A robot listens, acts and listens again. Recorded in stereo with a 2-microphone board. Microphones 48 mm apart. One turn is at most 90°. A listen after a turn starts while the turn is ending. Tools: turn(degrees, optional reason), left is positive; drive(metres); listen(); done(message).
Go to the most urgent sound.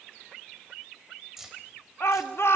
turn(degrees=60, reason="The shout: about 60° left or 120° left.")
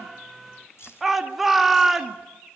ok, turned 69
drive(metres=1.0)
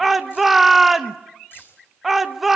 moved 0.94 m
drive(metres=1.0)
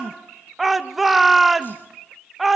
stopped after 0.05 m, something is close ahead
done("Arrived at the shout, straight ahead.")